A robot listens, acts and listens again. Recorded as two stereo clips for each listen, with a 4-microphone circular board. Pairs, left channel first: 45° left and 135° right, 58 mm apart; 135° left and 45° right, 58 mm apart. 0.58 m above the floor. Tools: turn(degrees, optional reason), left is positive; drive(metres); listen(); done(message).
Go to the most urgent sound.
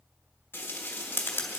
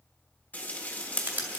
listen()
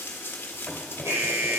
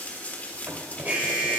turn(degrees=-110, reason="The alarm: 110° right.")
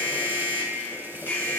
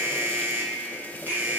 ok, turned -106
drive(metres=1.0)
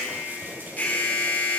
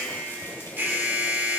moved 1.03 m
drive(metres=1.0)
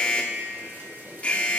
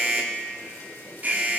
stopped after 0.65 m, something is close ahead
done("Arrived at the alarm, straight ahead.")